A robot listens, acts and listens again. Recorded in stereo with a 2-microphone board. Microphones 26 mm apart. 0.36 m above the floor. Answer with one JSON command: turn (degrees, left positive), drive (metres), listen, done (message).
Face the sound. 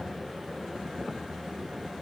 {"listen": true}
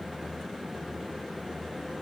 {"listen": true}
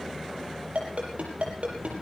{"turn": -60}
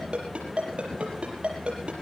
{"turn": -60}
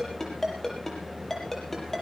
{"turn": 10}
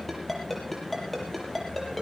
{"done": "Facing the ringtone, over 4 m away."}